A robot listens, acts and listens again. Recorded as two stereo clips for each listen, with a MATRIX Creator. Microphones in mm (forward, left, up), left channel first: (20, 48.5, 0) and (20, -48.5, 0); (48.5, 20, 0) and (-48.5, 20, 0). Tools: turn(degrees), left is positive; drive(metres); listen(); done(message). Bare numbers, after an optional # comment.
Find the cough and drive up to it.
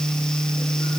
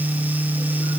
listen()
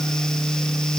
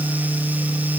listen()
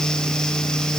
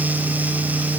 done("I can't make out a cough.")